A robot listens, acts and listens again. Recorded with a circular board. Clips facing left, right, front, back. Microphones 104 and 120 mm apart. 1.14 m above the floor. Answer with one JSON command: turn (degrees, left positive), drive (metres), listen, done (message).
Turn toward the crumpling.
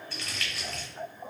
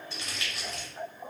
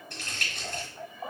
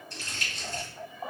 {"turn": -20}
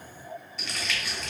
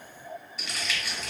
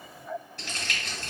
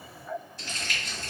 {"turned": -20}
{"done": "Found it: crumpling, straight ahead, under 1 m away."}